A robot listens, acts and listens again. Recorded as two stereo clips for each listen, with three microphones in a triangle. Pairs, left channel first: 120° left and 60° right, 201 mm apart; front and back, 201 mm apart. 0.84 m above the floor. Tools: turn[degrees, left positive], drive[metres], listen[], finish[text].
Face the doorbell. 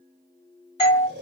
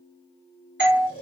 Thought: The doorbell: straight behind.
Action: turn[180]
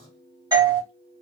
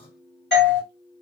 Action: finish[Facing the doorbell, 1 to 2 m away.]